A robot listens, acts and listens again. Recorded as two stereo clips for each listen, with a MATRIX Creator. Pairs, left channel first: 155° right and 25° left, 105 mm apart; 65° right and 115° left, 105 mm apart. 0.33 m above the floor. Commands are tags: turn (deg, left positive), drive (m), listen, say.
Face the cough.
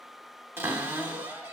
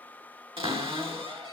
<listen/>
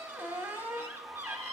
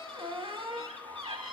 <listen/>
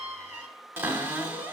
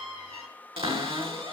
<say>I can't make out a cough to turn to.</say>